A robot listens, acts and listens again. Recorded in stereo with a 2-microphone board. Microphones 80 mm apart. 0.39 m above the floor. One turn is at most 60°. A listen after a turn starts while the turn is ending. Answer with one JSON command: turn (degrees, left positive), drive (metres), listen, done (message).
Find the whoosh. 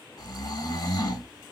{"listen": true}
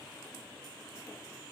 {"listen": true}
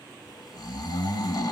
{"done": "I can't make out a whoosh, only snoring."}